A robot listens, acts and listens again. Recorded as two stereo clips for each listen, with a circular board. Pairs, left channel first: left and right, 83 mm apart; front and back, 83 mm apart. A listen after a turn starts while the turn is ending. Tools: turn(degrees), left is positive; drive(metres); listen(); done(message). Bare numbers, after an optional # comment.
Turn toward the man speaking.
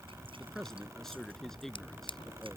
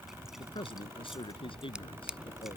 done("Facing the man speaking.")